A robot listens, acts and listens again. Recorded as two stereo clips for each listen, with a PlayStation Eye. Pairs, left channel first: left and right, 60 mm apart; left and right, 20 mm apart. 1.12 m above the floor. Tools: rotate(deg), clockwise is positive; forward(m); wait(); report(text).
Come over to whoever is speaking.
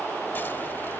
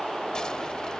wait()
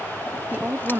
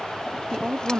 rotate(25)
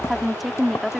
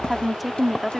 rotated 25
forward(1.0)
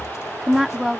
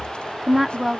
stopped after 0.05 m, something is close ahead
report("Something is in my way. I am facing the woman speaking but have not reached it.")